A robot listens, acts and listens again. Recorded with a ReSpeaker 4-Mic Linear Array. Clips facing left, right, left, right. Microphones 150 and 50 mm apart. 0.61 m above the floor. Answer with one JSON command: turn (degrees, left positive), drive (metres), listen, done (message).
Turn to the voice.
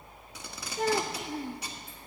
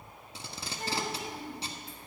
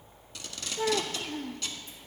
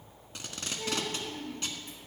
{"turn": 70}
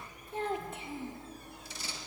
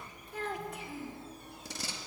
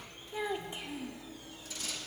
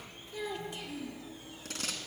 {"turn": 25}
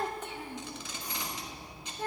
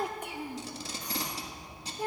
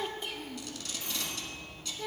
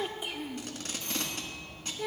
{"turn": -15}
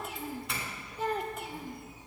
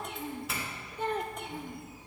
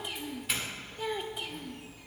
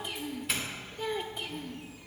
{"done": "Facing the child speaking."}